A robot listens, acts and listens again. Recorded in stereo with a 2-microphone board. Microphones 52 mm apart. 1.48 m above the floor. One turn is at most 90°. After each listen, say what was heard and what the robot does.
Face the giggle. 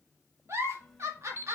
The giggle: about 60° right or 120° right. Turn 60° right.
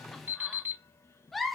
Found it: a giggle, straight ahead.